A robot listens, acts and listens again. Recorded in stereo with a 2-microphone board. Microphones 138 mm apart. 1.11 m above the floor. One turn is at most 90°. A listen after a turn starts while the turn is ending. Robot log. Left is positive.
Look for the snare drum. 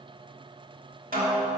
cmd yaw -90
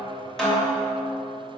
note: So it is at 10° left.
cmd yaw +10
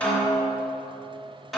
end: Found it: a snare drum, straight ahead.